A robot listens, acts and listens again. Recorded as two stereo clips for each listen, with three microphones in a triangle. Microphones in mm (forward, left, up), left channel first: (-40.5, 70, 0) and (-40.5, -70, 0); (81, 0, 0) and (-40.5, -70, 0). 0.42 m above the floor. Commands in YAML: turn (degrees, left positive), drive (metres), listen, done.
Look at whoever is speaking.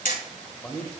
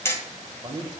turn: 170
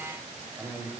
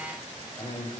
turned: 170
done: "Found it: a man speaking, straight ahead, 1 to 2 m away."